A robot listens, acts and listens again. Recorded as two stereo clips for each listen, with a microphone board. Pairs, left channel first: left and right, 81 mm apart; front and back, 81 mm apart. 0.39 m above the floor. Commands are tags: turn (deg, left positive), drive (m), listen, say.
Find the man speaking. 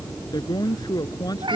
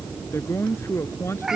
<turn deg="55"/>
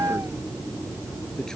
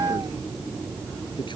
<listen/>
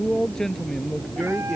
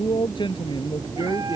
<say>Found it: a man speaking, straight ahead.</say>